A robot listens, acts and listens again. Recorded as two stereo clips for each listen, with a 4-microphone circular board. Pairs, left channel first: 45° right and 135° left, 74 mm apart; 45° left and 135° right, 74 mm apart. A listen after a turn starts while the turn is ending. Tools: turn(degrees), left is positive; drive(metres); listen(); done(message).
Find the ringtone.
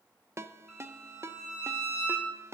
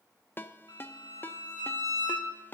turn(degrees=100)
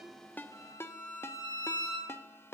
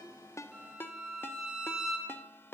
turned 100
done("Facing the ringtone.")